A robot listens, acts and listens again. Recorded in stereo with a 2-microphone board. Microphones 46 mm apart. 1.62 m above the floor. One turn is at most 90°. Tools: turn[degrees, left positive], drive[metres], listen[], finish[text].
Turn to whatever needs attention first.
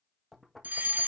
Thought: The fire alarm: about 40° right or 140° right.
Action: turn[-40]
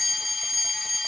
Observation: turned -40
Action: finish[Facing the fire alarm.]